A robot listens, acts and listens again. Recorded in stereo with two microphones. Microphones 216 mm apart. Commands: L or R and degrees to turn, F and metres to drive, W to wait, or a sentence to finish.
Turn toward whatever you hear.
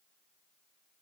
W
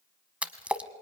R30
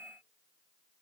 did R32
W
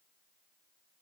I heard a splash, but can't make it out now. It was about 25° left or 140° right.